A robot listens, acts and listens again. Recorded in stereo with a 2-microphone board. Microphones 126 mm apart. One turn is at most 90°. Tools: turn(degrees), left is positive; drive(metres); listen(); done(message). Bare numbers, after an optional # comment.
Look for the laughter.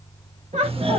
# The laughter: about 65° right or 115° right.
turn(-65)
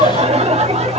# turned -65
# So it is at 60° right.
turn(-60)
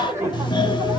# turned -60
# The laughter is now 20° right.
turn(-20)
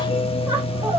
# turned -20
listen()
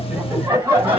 # The laughter is now 15° right.
turn(-15)
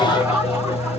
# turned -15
# The laughter is now 10° right.
turn(-10)
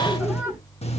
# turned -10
done("Found it: laughter, straight ahead, 2 to 4 m away.")